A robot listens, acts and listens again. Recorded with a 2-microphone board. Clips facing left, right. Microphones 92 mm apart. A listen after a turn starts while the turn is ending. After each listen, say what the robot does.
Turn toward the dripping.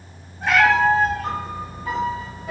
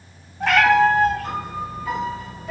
Keep listening.
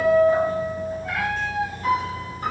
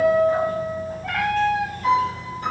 Keep listening.
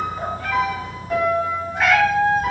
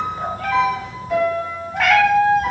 I can't make out dripping to turn to.